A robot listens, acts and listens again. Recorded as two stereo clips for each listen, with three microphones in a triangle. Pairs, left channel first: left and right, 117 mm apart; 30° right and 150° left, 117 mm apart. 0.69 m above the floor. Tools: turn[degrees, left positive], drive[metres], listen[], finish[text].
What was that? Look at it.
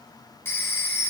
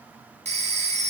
Thought: The phone ringing: 160° left.
Action: turn[160]
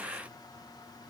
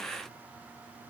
Action: listen[]
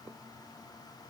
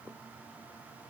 Action: listen[]
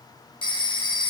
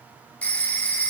Thought: The phone ringing is now 45° left.
Action: turn[45]
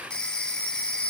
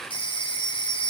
Thought: The phone ringing is now 10° left.
Action: turn[10]
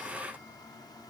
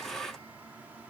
Action: listen[]
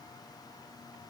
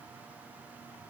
Action: listen[]
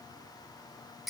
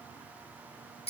Action: finish[Found it: a phone ringing, straight ahead, under 1 m away.]